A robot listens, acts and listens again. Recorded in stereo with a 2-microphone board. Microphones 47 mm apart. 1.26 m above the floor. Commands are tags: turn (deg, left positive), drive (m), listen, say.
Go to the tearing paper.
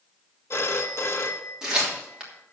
<turn deg="-30"/>
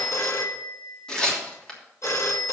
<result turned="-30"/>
<turn deg="15"/>
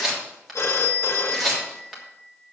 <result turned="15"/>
<drive m="1.0"/>
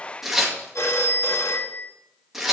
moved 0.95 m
<drive m="1.0"/>
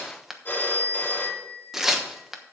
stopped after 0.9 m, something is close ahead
<say>Arrived at the tearing paper, straight ahead.</say>